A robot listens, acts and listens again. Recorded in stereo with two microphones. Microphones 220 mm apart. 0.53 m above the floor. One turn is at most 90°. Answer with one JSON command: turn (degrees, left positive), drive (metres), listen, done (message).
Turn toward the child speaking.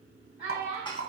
{"turn": 35}
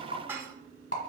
{"listen": true}
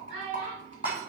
{"turn": 90}
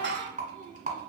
{"turn": 10}
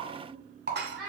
{"done": "Facing the child speaking, 2 to 4 m away."}